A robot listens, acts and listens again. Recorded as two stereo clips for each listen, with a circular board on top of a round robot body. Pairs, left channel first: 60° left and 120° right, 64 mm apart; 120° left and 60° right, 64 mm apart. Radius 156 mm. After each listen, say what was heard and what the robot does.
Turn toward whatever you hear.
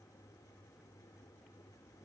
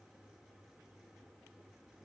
Keep listening.
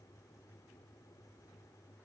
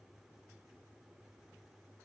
Keep listening.
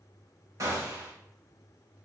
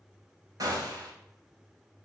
The gunshot: 85° right. Turn 85° right.
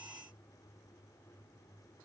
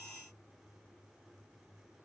I heard a gunshot from this way, but can't make it out now.